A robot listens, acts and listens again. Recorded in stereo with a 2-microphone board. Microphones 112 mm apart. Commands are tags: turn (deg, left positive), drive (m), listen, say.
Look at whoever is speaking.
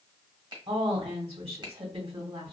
<turn deg="-60"/>
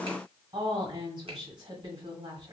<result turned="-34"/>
<turn deg="-55"/>
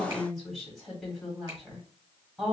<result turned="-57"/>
<say>Facing the woman speaking, 1 to 2 m away.</say>